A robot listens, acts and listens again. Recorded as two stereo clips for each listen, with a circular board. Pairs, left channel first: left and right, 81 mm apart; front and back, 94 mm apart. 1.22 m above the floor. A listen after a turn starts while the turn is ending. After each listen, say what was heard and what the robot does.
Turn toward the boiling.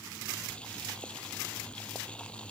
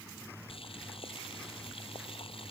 The boiling: 15° left. Turn 15° left.
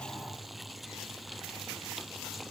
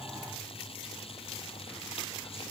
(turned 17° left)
Facing the boiling.